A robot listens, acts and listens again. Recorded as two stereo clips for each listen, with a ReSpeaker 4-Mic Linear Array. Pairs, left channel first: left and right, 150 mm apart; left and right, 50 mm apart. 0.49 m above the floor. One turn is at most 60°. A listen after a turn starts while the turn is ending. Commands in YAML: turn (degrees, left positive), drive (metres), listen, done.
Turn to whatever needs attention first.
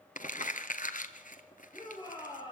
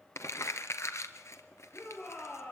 turn: 35
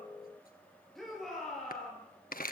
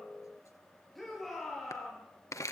done: "Facing the shout."